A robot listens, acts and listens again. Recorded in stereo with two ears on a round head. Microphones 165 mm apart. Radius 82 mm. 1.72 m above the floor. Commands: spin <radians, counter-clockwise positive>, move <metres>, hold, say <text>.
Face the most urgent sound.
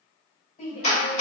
spin 0.79
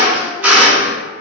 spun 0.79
hold
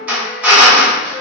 hold
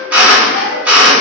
say I heard a shout, but can't make it out now. It was about straight ahead or 90° left.